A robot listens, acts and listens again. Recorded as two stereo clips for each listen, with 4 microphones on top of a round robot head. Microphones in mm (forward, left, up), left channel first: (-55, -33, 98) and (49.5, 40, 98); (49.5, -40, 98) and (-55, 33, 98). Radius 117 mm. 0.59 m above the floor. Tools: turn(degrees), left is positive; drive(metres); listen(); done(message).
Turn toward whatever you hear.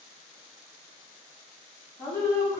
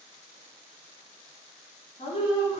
turn(degrees=-80)
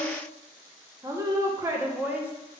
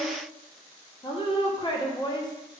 turn(degrees=-30)
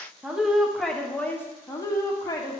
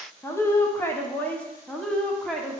turn(degrees=-115)
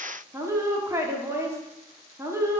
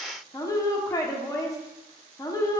done("Facing the woman speaking, 1 to 2 m away.")